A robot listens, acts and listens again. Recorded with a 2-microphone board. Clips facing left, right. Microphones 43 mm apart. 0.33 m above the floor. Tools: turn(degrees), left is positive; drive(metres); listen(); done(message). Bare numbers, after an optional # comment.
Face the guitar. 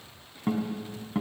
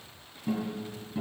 # The guitar: about 60° left or 120° left.
turn(60)
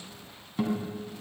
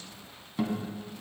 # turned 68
done("Found it: a guitar, straight ahead.")